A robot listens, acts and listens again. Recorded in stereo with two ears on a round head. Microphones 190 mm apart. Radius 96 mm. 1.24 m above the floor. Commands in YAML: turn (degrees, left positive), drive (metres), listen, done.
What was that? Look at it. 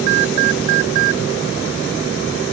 listen: true
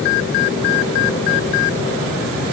listen: true
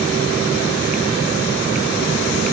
done: "I can't make out anything."